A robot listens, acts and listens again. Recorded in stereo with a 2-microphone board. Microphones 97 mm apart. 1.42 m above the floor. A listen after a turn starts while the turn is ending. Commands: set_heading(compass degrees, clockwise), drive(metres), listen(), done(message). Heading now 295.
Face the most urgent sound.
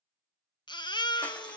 set_heading(250)
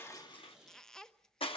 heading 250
listen()
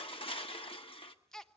done("Found it: a baby crying, straight ahead.")